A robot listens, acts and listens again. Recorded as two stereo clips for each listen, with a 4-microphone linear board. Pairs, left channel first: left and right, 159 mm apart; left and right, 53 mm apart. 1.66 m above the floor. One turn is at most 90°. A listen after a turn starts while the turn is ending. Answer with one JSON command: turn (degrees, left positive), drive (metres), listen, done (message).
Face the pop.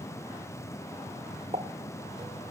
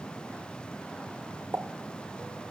{"turn": -45}
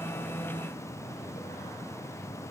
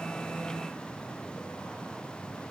{"listen": true}
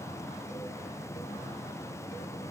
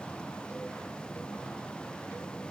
{"done": "I heard a pop, but can't make it out now. It was about straight ahead or 90° right."}